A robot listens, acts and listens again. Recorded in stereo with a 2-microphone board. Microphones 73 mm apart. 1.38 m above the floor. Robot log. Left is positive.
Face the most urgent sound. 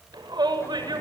cmd yaw -90
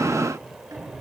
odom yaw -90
cmd idle
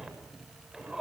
end: Found it: a shout, straight ahead, over 4 m away.